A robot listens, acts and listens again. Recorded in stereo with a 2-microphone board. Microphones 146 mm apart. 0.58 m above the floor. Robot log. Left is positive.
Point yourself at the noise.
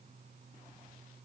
cmd idle
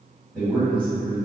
cmd yaw +30
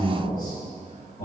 note: So it is at 140° left.
cmd yaw +140
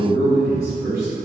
note: The man speaking is now 20° left.
cmd yaw +20
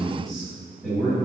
end: Facing the man speaking, 1 to 2 m away.